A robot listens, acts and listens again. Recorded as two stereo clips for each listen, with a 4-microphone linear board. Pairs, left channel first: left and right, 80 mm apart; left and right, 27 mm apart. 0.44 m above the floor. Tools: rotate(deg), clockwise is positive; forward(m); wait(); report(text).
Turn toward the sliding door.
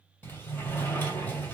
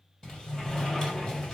rotate(-20)
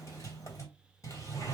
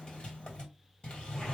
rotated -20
rotate(-135)
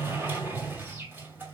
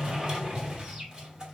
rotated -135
rotate(30)
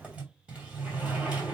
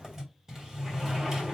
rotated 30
rotate(15)
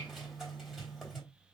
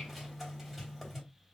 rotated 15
report("Found it: a sliding door, straight ahead.")